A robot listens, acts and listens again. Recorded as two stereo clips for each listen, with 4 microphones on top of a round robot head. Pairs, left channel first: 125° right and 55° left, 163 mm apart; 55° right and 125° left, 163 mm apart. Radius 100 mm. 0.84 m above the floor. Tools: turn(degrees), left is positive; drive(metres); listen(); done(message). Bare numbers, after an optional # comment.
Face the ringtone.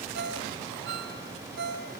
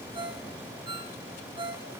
# The ringtone: 65° left.
turn(65)
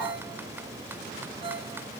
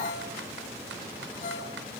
listen()
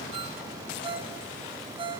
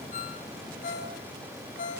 # The ringtone is now 10° right.
turn(-10)
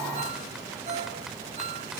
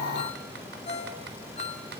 done("Facing the ringtone, over 4 m away.")